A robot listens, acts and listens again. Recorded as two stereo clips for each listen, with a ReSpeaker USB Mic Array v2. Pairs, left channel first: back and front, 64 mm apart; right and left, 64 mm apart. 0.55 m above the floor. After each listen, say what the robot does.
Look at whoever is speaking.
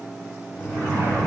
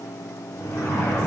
Keep listening.
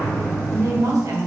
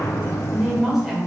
Found it: a woman speaking, straight ahead.